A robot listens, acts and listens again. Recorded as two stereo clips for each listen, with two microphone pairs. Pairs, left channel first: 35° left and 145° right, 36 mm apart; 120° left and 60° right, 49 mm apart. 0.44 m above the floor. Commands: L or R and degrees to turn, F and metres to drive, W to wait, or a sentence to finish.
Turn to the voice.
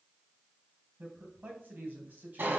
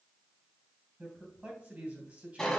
R120
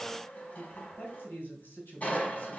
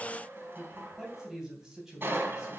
L25
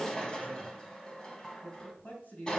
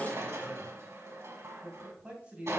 Facing the man speaking.